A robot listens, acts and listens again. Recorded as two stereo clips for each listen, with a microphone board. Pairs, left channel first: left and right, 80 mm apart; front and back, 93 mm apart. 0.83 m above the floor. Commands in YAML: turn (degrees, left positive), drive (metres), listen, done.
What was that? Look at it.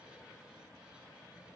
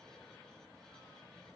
listen: true
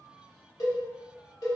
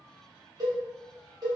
turn: 135
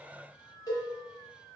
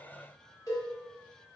turn: 50
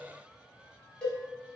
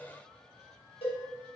turn: 15
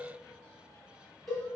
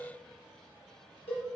done: "Found it: a cowbell, straight ahead."